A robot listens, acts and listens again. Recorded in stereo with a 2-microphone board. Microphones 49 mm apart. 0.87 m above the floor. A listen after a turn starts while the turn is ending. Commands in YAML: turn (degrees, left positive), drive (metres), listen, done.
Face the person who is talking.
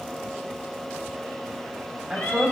turn: -30
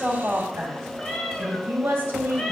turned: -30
turn: -140
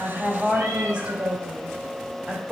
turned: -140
turn: -35
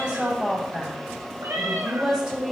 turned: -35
turn: -20
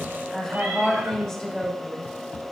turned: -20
done: "Facing the woman speaking, 2 to 4 m away."